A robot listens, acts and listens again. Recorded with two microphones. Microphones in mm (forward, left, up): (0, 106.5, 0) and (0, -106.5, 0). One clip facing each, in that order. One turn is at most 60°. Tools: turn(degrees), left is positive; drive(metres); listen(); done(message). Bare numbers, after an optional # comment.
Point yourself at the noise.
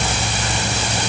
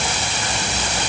listen()
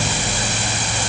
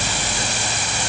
listen()
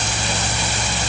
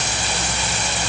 done("I can't make out anything to turn to.")